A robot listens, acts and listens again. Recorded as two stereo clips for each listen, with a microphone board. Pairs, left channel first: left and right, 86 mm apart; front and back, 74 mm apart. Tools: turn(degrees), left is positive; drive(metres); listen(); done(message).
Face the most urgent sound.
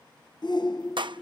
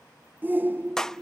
turn(degrees=120)
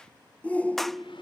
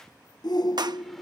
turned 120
turn(degrees=20)
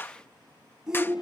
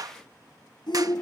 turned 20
done("Found it: a shout, straight ahead.")